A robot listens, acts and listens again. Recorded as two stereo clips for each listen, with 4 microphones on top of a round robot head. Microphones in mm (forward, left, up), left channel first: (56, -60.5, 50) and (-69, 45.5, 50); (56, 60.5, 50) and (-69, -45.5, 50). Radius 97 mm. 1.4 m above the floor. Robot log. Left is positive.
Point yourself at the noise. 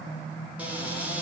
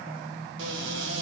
note: The cupboard door: 140° right.
cmd yaw -140
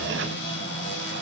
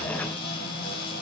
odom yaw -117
note: The cupboard door is now 20° right.
cmd yaw -20
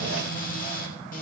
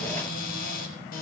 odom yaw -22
end: Found it: a cupboard door, straight ahead, 2 to 4 m away.